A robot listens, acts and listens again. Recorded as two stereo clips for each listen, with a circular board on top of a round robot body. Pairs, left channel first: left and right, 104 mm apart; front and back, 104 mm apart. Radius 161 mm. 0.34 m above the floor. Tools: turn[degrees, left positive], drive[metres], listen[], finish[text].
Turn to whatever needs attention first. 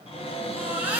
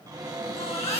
Thought: The baby crying: 15° right.
Action: turn[-15]
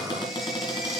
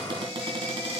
Action: listen[]
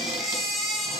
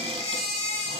Action: finish[Facing the baby crying, 2 to 4 m away.]